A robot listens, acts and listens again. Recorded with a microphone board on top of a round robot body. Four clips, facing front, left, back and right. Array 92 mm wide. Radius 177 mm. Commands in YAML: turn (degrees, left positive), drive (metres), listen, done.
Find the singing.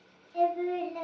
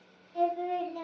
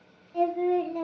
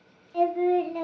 turn: -90
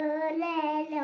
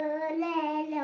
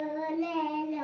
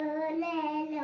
turn: 35
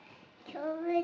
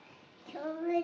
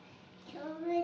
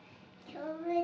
turn: 30
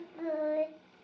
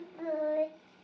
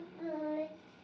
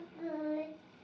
turn: 35
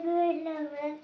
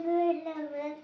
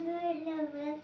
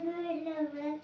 turn: 25
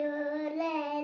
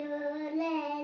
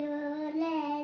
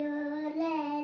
done: "Found it: singing, straight ahead, 1 to 2 m away."